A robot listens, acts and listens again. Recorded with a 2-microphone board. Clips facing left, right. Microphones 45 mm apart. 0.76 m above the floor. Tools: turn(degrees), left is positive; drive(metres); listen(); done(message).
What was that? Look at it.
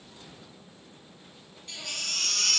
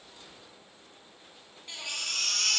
turn(degrees=-30)
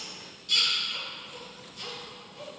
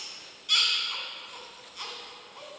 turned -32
turn(degrees=-135)
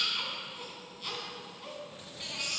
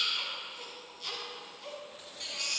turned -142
done("Found it: a baby crying, straight ahead, 2 to 4 m away.")